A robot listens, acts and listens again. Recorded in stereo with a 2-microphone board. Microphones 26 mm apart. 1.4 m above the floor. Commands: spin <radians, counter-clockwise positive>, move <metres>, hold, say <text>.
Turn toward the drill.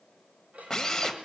spin 0.52
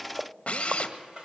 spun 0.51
spin 2.36
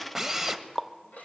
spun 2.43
say Facing the drill, 1 to 2 m away.